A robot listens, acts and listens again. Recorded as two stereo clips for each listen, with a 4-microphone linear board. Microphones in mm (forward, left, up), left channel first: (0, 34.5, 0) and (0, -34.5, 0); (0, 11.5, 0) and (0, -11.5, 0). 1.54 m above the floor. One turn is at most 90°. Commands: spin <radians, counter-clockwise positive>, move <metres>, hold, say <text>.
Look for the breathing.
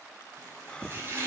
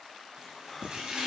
spin 0.52
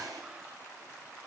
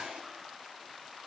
hold
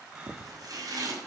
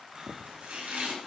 spin -0.26
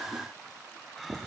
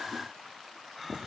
say Facing the breathing, under 1 m away.